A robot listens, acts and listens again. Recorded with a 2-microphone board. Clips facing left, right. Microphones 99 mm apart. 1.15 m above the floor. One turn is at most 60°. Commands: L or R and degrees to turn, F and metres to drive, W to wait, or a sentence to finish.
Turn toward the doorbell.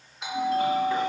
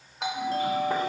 R60
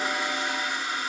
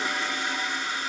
R30
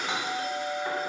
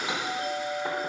R15
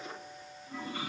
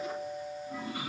Found it: a doorbell, straight ahead.